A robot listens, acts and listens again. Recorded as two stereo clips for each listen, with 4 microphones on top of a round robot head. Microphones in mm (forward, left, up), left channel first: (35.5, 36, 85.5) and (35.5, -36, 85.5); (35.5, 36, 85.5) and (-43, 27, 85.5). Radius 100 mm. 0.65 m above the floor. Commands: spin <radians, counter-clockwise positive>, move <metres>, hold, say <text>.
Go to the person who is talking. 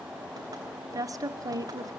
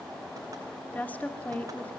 spin -1.05
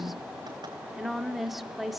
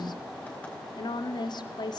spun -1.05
move 1.0
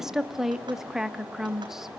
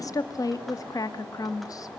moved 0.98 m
move 1.0
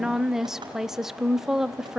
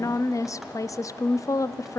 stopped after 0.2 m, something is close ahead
spin -0.17
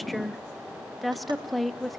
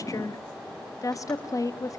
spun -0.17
say Arrived at the woman speaking, straight ahead.